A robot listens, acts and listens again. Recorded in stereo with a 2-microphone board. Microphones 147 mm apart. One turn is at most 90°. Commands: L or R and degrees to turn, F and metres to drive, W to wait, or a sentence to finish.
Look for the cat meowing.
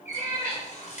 R60
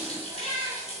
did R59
R35
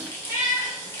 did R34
R25
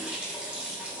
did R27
W
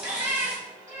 R20
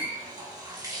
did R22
W
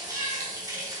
W
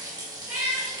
R10
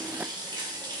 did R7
W
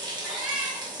Found it: a cat meowing, straight ahead.